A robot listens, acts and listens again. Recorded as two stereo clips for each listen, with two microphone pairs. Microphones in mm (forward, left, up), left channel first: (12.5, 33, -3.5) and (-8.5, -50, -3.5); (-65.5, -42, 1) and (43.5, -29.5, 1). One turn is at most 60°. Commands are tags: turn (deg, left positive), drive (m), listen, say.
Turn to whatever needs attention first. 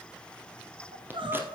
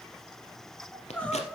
<turn deg="-60"/>
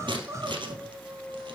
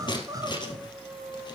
<turn deg="-50"/>
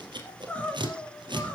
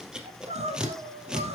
<say>Found it: crying, straight ahead, 2 to 4 m away.</say>